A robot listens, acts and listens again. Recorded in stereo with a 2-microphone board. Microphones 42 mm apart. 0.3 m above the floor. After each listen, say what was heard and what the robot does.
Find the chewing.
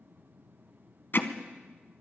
Keep listening.
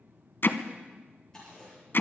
Turn 30° left.
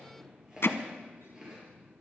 So it is at 15° right. Turn 15° right.
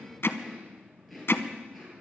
Found it: chewing, straight ahead, over 4 m away.